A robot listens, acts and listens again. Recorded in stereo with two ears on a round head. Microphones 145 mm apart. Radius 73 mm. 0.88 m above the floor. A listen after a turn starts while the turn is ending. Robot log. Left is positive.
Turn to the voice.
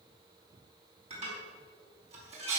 cmd idle
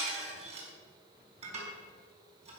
cmd idle
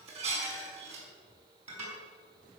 end: I can't make out anyone speaking to turn to.